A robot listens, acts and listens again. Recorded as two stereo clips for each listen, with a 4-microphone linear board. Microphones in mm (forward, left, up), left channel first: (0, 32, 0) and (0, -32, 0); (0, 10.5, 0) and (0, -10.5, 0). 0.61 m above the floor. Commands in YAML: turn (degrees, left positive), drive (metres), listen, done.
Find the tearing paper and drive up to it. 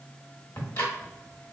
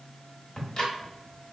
listen: true
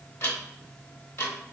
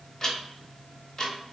listen: true
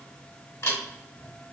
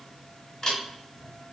done: "I can't make out tearing paper, only ticking."